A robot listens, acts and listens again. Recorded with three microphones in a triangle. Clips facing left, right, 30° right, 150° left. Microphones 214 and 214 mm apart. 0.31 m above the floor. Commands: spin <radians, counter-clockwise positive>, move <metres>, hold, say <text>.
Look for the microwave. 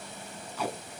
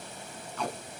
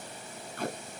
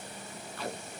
hold
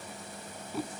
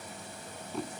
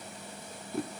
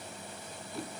hold
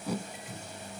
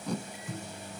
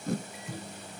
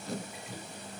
spin -1.05
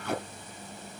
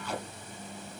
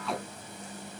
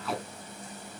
hold
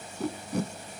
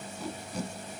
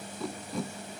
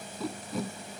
hold
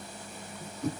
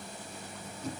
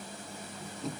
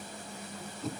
say Facing where the microwave came from. I can't hear it now.